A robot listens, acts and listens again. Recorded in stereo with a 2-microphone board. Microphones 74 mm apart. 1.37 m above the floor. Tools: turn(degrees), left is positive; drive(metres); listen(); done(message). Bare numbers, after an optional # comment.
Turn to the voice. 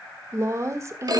# The woman speaking: about 45° right or 135° right.
turn(-45)
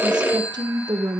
# So it is at 90° right.
turn(-90)
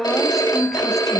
done("Found it: a woman speaking, straight ahead.")